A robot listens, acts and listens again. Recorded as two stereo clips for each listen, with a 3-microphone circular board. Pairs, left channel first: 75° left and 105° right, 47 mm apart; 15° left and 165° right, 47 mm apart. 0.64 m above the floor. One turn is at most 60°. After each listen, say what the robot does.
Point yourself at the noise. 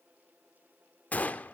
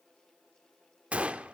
Turn 60° left.
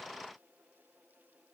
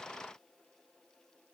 Turn 60° left.
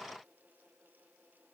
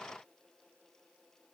Turn 10° left.
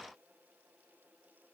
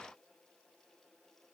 I heard a gunshot from this way, but can't make it out now.